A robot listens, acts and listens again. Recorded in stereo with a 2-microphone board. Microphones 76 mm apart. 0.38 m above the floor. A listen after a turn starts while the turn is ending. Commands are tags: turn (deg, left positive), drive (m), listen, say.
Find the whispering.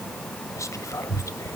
<turn deg="45"/>
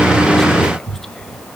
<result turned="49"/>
<turn deg="10"/>
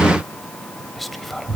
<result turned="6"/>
<say>Facing the whispering, 1 to 2 m away.</say>